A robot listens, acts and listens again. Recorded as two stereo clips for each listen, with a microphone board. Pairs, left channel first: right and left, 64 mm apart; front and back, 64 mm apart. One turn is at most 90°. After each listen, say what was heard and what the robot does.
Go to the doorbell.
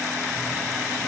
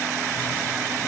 Keep listening.
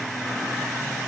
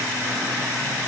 Keep listening.
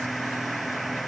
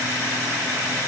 I can't make out a doorbell to turn to.